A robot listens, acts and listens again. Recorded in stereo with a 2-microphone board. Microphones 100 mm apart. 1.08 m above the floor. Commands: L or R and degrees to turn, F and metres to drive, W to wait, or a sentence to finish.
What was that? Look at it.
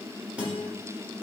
R30
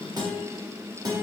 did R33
R130
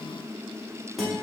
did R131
Found it: a guitar, straight ahead.